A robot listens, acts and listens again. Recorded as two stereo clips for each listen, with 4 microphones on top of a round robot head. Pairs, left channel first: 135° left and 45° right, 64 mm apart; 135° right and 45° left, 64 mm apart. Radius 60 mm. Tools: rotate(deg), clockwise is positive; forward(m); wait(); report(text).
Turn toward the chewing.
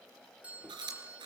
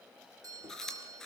rotate(55)
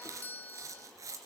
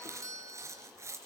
report("Facing the chewing, 2 to 4 m away.")